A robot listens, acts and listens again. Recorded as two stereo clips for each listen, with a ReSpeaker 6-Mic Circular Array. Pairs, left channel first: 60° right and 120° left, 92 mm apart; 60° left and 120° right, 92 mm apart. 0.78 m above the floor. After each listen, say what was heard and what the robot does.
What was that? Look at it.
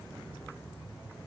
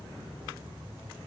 Keep listening.
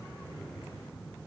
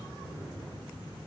Keep listening.
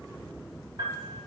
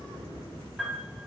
The piano: 155° left. Turn 155° left.
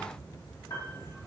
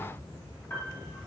The piano is now 10° right. Turn 10° right.
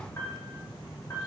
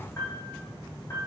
Facing the piano.